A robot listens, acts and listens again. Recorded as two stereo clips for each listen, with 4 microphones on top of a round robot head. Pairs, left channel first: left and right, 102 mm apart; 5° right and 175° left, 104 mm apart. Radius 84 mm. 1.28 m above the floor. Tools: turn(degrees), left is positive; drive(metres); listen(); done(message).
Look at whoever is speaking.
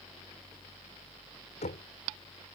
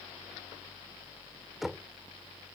listen()
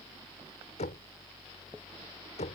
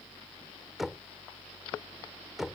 listen()
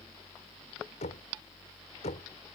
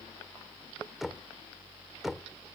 done("I can't make out anyone speaking, only knocking.")